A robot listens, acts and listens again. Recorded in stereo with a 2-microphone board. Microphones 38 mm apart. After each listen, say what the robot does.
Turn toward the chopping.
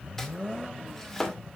Turn 30° left.
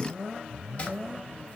Keep listening.
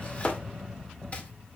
Turn 140° left.
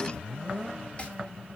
Turn 30° left.
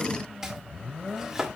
Turn 15° right.
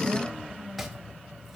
Keep listening.
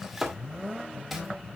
Found it: chopping, straight ahead, 2 to 4 m away.